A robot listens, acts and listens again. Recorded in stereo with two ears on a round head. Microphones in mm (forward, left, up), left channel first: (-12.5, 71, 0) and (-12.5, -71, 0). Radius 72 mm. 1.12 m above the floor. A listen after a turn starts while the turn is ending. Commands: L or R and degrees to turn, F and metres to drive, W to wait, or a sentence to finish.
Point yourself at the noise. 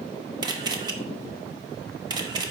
R25
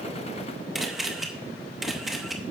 Found it: a camera shutter, straight ahead.